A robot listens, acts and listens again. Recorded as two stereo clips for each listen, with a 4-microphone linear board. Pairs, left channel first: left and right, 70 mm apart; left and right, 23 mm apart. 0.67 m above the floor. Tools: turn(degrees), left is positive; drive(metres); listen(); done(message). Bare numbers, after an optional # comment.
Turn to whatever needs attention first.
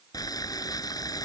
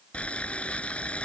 listen()
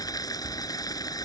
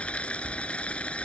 listen()
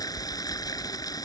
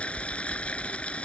done("I can't make out anything urgent to turn to.")